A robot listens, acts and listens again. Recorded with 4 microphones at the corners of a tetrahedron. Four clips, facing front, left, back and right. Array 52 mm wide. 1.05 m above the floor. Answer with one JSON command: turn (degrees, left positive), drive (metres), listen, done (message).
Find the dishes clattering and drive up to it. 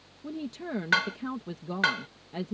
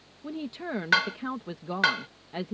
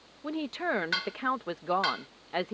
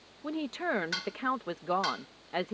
{"turn": 60}
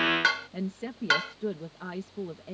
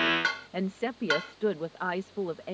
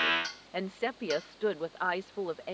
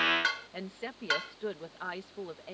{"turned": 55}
{"drive": 1.0}
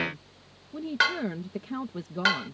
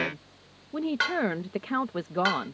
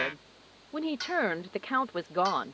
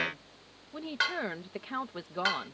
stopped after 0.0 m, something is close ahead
{"done": "Something is in my way. I am facing the dishes clattering but have not reached it."}